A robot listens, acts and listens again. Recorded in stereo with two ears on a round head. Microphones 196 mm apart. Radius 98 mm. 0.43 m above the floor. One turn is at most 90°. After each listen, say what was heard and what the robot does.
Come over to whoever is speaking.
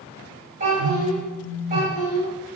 The child speaking: about 40° right or 140° right. Turn 40° right.
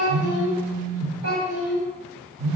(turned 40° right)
So it is at 95° right. Turn 90° right.
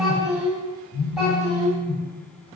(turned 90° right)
Drive 1.0 m forward.
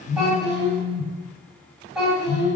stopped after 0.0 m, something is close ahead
Blocked. The child speaking is further on, straight ahead.